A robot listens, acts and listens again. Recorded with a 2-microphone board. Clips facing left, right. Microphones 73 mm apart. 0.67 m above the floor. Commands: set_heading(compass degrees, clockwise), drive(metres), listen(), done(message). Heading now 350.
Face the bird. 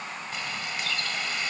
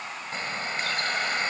set_heading(25)
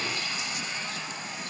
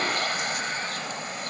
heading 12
set_heading(132)
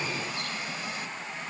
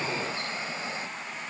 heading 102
set_heading(132)
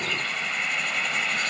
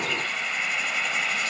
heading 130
done("Found it: a bird, straight ahead.")